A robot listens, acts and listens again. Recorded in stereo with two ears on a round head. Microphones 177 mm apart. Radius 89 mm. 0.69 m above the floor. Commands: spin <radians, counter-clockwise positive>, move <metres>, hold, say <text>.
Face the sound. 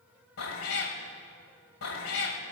spin 1.57
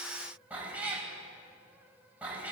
spin -0.17
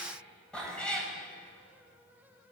say Found it: a cat meowing, straight ahead.